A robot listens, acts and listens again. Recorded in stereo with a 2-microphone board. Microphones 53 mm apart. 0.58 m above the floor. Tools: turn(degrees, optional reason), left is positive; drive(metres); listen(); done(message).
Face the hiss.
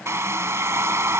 listen()
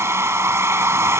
listen()
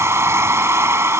done("I can't make out a hiss, only a hair dryer.")